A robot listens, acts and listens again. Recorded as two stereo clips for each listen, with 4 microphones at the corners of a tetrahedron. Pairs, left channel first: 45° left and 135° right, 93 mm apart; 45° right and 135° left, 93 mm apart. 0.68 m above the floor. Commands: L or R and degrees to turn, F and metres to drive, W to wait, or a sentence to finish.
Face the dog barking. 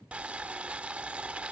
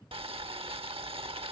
W
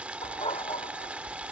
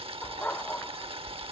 L30
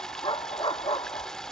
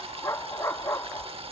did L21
L15
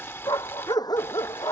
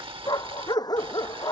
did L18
Found it: a dog barking, straight ahead.